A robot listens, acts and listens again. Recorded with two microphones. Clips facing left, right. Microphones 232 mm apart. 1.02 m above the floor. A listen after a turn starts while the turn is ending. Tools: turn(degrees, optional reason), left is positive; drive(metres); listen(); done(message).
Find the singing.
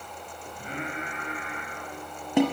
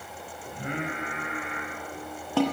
turn(degrees=-70, reason="The singing: about 70° right or 110° right.")
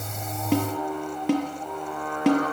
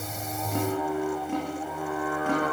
done("Found it: singing, straight ahead.")